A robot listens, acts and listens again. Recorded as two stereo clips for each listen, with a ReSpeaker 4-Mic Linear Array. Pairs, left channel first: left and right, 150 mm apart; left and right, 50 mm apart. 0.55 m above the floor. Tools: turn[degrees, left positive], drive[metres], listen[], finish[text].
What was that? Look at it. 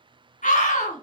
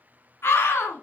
Thought: The scream: about 60° left or 120° left.
Action: turn[60]
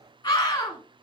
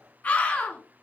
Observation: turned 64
Thought: So it is at 30° left.
Action: turn[30]
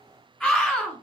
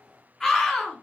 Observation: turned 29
Action: finish[Found it: a scream, straight ahead, 1 to 2 m away.]